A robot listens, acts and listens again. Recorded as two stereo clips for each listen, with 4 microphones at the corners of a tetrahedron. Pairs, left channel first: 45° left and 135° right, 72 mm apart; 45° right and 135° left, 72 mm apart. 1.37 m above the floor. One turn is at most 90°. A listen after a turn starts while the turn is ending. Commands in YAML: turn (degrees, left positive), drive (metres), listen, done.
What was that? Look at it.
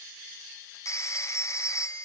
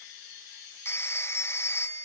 done: "Found it: a phone ringing, straight ahead, under 1 m away."